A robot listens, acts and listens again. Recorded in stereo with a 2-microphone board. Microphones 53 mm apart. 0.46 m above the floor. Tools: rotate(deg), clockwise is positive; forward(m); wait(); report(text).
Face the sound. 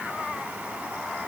wait()
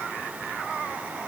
wait()
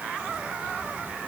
report("I can't make out anything.")